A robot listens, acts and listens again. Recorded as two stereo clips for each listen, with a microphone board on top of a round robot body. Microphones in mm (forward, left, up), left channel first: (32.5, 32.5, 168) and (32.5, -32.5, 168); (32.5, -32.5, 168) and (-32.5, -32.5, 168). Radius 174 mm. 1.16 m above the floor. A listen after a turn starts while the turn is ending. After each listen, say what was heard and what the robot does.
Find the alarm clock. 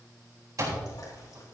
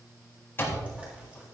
The alarm clock: 55° right. Turn 55° right.
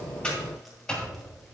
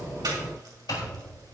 The alarm clock is now 15° left. Turn 15° left.
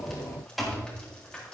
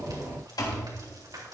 Facing the alarm clock.